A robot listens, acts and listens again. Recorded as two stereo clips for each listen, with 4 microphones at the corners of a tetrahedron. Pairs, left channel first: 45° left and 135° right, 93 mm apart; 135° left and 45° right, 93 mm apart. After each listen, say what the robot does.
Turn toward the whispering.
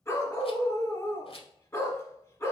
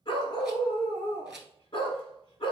Keep listening.
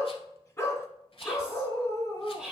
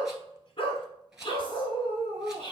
Turn 145° left.
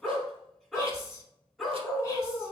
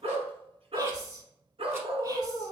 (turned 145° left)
Found it: whispering, straight ahead, 1 to 2 m away.